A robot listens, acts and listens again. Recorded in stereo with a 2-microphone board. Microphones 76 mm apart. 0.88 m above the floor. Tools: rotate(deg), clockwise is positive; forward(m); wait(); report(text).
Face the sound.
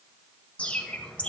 rotate(-15)
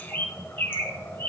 rotate(-150)
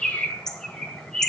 report("Found it: a bird, straight ahead.")